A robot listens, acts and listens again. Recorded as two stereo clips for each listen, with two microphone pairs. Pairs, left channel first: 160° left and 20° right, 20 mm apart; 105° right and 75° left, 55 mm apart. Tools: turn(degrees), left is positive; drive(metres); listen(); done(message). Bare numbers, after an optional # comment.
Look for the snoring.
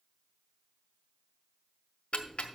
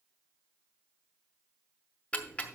listen()
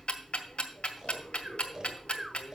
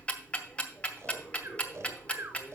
# The snoring: 40° left.
turn(40)
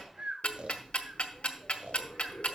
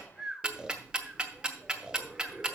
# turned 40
done("Facing the snoring.")